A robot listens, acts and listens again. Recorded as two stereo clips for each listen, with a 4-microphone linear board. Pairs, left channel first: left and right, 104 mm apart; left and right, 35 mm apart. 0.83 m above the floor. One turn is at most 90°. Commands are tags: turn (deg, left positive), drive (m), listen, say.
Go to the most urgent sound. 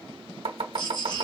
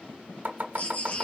<turn deg="50"/>
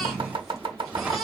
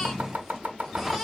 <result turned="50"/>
<drive m="1.0"/>
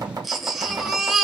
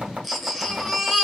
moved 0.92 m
<drive m="1.0"/>
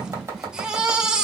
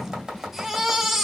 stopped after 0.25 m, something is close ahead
<turn deg="-10"/>
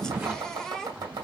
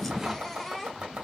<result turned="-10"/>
<say>I am next to the baby crying.</say>